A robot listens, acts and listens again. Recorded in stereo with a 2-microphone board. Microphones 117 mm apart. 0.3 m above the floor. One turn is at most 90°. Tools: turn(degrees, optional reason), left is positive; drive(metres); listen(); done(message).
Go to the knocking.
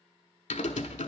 listen()
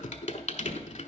turn(degrees=-60, reason="The knocking: about 60° right or 120° right.")
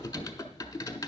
turn(degrees=-50, reason="So it is at 50° right.")
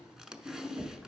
turn(degrees=-15, reason="The knocking is now 15° right.")
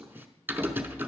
listen()
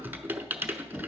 drive(metres=1.0)
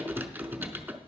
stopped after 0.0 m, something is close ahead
done("Something is in my way. I am facing the knocking but have not reached it.")